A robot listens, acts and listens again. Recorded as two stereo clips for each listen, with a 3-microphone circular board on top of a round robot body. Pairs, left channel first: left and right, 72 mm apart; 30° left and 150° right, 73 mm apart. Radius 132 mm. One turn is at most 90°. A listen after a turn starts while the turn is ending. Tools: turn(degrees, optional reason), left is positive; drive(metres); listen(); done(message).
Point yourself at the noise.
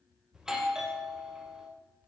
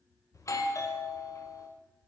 turn(degrees=-10, reason="The doorbell: 10° right.")
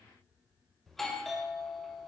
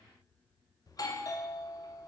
done("Found it: a doorbell, straight ahead, 2 to 4 m away.")